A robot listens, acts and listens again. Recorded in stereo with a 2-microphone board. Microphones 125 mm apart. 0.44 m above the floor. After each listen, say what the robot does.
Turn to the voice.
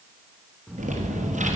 Turn 30° right.
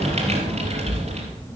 Turn 25° left.
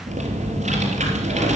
Turn 15° left.
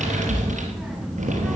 Found it: a child speaking, straight ahead.